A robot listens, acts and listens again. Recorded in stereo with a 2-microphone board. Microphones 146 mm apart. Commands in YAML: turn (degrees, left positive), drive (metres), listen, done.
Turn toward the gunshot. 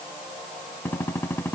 turn: 15
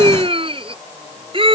listen: true
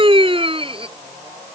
done: "I heard a gunshot, but can't make it out now. It was about straight ahead or 150° left."